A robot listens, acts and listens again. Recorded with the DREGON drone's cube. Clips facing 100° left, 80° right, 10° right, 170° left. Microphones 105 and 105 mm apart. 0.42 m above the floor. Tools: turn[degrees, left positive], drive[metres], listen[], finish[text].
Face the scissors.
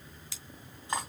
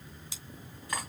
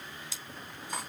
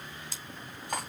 Thought: The scissors: 150° right.
Action: turn[-150]
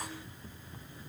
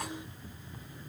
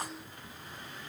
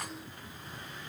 Action: listen[]
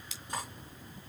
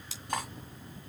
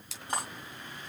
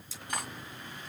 Thought: The scissors is now 25° right.
Action: turn[-25]
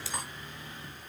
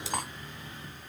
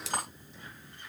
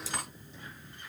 Thought: The scissors is now 10° right.
Action: turn[-10]
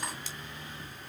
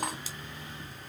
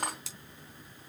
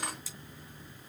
Action: finish[Facing the scissors, 2 to 4 m away.]